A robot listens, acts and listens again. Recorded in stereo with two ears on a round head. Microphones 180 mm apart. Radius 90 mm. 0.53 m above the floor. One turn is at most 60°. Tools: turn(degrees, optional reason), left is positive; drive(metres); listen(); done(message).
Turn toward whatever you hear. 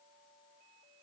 listen()
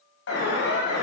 turn(degrees=60, reason="The alarm: about 60° left or 120° left.")
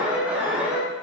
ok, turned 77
turn(degrees=-10, reason="So it is at 10° right.")
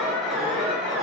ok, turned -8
done("Facing the alarm.")